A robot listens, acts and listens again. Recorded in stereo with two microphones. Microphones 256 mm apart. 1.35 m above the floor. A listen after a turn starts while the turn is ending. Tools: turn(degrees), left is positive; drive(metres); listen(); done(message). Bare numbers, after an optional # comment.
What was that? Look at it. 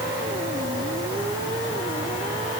listen()
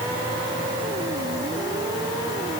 listen()
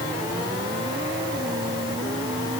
done("I can't make out anything to turn to.")